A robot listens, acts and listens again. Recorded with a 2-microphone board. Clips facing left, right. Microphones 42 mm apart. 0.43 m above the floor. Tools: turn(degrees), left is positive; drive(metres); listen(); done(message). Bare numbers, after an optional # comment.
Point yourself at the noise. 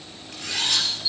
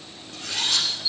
turn(90)
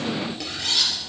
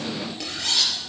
done("Found it: cutlery clinking, straight ahead, over 4 m away.")